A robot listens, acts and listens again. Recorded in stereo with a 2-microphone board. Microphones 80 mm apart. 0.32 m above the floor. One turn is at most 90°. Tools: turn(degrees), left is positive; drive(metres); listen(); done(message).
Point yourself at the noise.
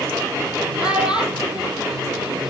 turn(degrees=-30)
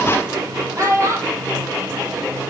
turn(degrees=-90)
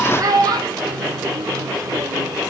turn(degrees=-55)
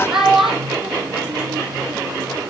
done("Found it: a child speaking, straight ahead.")